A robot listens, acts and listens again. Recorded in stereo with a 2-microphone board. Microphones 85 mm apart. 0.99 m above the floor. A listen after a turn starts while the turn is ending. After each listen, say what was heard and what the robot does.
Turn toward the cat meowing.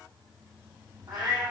The cat meowing: about 55° right or 125° right. Turn 55° right.
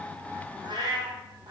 So it is at 55° right. Turn 55° right.
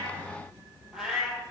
Facing the cat meowing, 1 to 2 m away.